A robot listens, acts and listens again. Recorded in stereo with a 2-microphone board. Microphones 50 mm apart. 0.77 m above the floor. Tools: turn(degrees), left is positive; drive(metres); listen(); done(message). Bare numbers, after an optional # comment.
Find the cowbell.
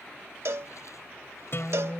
# The cowbell: about 65° right or 115° right.
turn(-65)
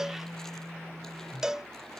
# So it is at 10° right.
turn(-10)
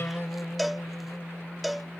done("Found it: a cowbell, straight ahead.")